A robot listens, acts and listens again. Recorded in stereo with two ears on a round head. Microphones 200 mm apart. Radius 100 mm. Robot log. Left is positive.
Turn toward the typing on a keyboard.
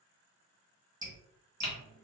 note: The typing on a keyboard: about 25° left or 155° left.
cmd yaw +25
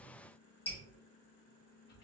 cmd idle
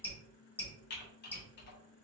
note: So it is at 125° left.
cmd yaw +125
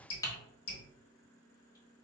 note: The typing on a keyboard is now 20° left.
cmd yaw +20
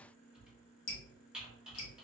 end: Facing the typing on a keyboard.